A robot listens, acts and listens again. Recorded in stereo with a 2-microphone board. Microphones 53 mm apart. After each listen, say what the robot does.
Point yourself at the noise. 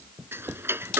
Turn 50° right.
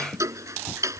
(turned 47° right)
Turn 85° right.
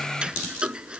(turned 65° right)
Turn 20° right.
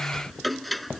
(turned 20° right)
Found it: ticking, straight ahead.